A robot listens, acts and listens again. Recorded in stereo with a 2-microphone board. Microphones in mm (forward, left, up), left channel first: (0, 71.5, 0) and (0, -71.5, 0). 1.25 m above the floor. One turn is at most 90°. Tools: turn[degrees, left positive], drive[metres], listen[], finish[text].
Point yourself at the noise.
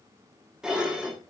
Action: turn[-30]
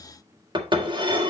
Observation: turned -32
Thought: So it is at 145° right.
Action: turn[-90]
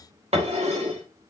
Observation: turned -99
Thought: The dishes clattering is now 50° right.
Action: turn[-50]
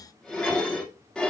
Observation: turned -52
Action: finish[Facing the dishes clattering.]